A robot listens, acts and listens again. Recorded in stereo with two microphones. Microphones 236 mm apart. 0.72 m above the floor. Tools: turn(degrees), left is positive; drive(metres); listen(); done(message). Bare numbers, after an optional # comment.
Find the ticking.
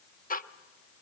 # The ticking: about 35° left or 145° left.
turn(35)
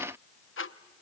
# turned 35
# So it is at 105° left.
turn(105)
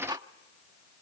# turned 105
# The ticking is now 20° right.
turn(-20)
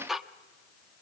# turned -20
done("Found it: ticking, straight ahead.")